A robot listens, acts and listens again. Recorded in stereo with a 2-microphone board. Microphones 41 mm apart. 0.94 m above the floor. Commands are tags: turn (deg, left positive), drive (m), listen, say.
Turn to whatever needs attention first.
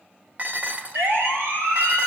<turn deg="-90"/>
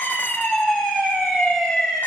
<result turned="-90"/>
<turn deg="10"/>
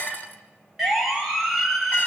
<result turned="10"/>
<say>Facing the siren.</say>